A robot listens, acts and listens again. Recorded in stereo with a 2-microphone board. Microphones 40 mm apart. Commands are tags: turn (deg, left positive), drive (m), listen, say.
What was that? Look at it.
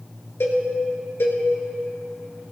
<turn deg="90"/>
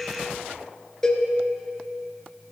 <turn deg="15"/>
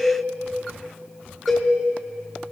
<say>Facing the cowbell, 2 to 4 m away.</say>